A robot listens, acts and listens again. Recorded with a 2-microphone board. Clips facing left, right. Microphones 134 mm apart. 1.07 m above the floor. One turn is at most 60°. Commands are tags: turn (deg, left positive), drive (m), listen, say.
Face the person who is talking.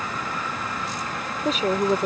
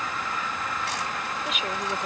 <turn deg="40"/>
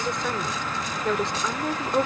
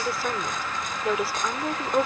<say>Found it: a woman speaking, straight ahead.</say>